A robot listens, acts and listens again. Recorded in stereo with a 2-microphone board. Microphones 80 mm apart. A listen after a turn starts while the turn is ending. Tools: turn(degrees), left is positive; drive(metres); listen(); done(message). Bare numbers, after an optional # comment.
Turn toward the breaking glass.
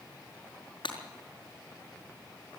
turn(90)
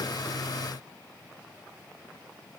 done("Facing where the breaking glass came from. I can't hear it now.")